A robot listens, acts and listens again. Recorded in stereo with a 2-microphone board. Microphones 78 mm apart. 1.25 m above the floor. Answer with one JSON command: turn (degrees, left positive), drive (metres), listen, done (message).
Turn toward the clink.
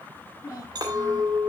{"turn": -55}
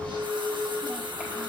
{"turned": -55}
{"turn": -70}
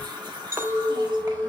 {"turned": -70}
{"turn": -30}
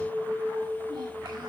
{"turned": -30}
{"turn": -15}
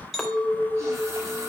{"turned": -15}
{"done": "Facing the clink."}